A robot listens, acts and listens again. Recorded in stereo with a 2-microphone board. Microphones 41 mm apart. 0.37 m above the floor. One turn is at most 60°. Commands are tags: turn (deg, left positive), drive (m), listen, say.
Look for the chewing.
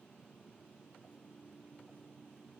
<listen/>
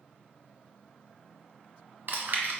<turn deg="-50"/>
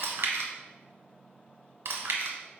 <turn deg="-60"/>
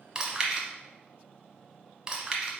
<turn deg="-20"/>
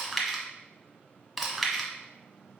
<say>Found it: chewing, straight ahead, 1 to 2 m away.</say>